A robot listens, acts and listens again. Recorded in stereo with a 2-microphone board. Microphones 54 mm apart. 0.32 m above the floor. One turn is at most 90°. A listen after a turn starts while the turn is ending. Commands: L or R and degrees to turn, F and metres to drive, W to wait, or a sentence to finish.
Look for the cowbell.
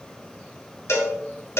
L55
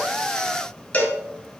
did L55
L35
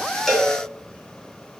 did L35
Facing the cowbell.